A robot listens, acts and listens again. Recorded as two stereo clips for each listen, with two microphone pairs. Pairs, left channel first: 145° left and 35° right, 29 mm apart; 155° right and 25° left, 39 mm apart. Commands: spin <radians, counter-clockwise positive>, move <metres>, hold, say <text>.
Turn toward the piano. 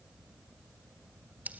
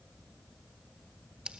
hold
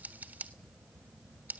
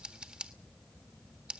hold
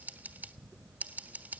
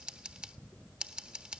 say I can't make out a piano, only scissors.